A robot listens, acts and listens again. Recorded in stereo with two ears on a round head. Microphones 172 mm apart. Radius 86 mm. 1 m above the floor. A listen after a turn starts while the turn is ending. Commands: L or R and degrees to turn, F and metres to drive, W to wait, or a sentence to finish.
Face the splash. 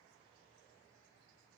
W
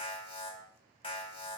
W
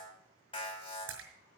R75
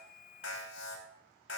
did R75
W
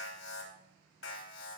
I heard a splash, but can't make it out now. It was about straight ahead or 30° right.